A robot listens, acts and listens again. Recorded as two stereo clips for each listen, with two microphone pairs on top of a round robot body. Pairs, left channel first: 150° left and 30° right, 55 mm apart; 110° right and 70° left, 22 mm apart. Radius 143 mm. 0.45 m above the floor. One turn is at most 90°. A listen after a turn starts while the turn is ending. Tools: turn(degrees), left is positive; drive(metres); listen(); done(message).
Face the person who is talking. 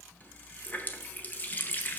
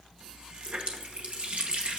listen()
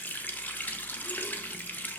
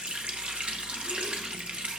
listen()
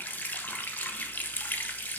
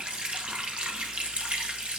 done("I can't make out anyone speaking, only a running tap.")